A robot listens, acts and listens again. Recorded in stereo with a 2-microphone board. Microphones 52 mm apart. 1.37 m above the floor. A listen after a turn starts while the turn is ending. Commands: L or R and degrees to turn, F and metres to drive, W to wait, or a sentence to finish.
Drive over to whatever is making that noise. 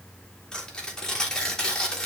L30
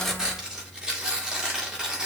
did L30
R15
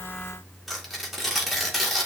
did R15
F1.0
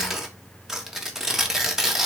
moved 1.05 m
R10
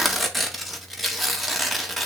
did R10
F1.0
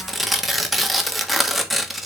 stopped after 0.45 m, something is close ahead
I am next to the tearing paper.